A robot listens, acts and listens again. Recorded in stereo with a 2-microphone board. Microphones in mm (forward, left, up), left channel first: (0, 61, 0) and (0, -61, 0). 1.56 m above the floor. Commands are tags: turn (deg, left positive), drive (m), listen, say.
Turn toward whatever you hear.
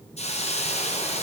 <turn deg="65"/>
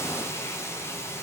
<turn deg="25"/>
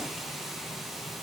<say>Found it: a hiss, straight ahead, 1 to 2 m away.</say>